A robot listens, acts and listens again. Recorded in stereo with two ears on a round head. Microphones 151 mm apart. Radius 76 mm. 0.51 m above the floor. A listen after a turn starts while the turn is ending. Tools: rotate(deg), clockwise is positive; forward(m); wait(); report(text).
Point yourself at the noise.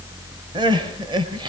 rotate(25)
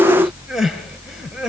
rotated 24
report("Found it: crying, straight ahead.")